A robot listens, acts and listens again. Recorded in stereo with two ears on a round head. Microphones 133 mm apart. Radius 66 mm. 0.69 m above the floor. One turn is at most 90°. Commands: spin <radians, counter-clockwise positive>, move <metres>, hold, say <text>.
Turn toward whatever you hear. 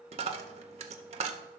spin -0.79
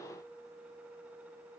hold
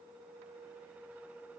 say I heard a dropped coin, but can't make it out now. It was about straight ahead or 90° right.